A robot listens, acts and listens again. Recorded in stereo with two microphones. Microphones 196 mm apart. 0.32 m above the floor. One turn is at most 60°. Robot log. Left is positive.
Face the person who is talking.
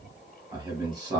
note: The man speaking: about 20° right or 160° right.
cmd yaw -20
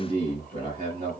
note: So it is at 135° right.
cmd yaw -60
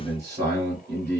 note: The man speaking is now 75° right.
cmd yaw -60
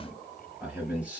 note: The man speaking is now 10° right.
cmd yaw -10
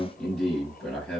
end: Facing the man speaking, 1 to 2 m away.